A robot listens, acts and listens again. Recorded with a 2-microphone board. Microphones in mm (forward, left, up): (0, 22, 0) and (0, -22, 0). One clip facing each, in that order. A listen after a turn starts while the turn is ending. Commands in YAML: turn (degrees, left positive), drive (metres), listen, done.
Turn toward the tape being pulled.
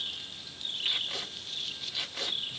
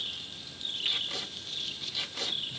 turn: 20
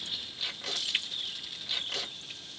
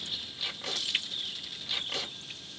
done: "Facing the tape being pulled, 1 to 2 m away."